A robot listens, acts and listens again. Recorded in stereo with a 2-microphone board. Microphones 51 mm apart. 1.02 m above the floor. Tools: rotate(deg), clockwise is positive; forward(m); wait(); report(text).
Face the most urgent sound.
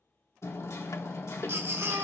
rotate(55)
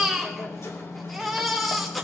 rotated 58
report("Found it: a baby crying, straight ahead, 2 to 4 m away.")